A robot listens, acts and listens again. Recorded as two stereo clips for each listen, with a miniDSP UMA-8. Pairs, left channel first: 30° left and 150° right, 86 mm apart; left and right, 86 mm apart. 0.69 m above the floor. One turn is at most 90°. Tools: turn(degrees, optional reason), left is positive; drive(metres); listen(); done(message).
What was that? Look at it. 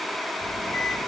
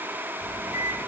done("Facing the microwave.")